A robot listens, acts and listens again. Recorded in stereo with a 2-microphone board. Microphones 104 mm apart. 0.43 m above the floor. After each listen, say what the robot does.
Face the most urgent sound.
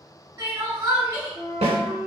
Turn 45° right.
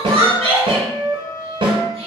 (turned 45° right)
Turn 90° right.
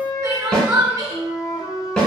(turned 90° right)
Turn 25° right.
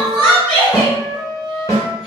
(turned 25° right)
Found it: crying, straight ahead.